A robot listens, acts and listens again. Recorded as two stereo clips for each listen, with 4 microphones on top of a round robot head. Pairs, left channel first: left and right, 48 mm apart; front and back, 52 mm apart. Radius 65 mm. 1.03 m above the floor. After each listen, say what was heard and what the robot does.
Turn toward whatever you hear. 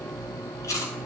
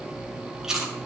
The chewing: 100° left. Turn 100° left.
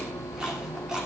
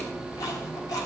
Keep listening.
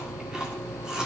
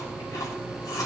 The chewing is now 15° right. Turn 15° right.
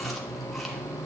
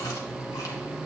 Keep listening.
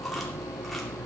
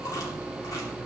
Keep listening.
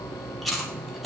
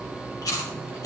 Facing the chewing.